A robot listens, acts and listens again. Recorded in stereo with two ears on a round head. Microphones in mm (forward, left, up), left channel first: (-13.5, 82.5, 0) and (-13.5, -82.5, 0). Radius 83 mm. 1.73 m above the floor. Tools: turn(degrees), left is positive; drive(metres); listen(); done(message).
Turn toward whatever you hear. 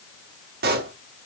turn(degrees=-55)
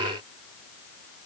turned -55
listen()
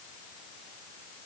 done("I heard a pop, but can't make it out now. It was about straight ahead or 70° right.")